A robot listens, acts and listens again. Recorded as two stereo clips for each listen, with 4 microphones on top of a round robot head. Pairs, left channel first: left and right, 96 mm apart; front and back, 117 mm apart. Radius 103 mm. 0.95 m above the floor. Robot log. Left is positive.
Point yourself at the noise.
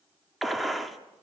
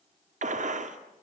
note: The gunshot: straight behind.
cmd yaw +180
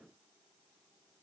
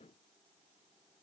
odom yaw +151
note: Nothing new. It was at 30° left.
cmd yaw +30
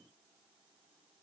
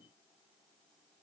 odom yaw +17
note: Nothing new. It was at 10° left.
cmd yaw +10
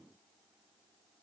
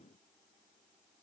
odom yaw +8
end: I heard a gunshot from this way, but can't make it out now.